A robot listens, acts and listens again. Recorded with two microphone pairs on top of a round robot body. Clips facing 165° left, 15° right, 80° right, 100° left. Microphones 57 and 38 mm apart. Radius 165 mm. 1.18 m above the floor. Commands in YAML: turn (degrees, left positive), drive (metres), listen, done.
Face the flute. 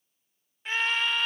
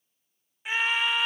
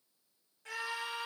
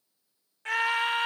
listen: true
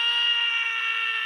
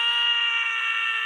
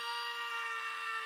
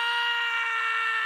listen: true
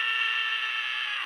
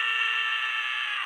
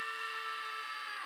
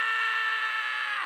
done: "I can't make out a flute, only a scream."